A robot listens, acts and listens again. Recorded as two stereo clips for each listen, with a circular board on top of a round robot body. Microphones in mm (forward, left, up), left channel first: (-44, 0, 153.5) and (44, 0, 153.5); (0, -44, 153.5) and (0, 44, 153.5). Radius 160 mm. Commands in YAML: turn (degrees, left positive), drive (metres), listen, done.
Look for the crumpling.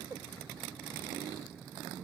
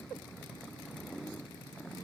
listen: true
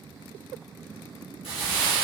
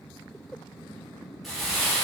turn: 180
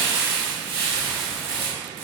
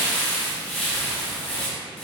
turn: -20
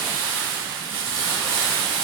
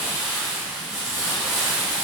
done: "Facing the crumpling."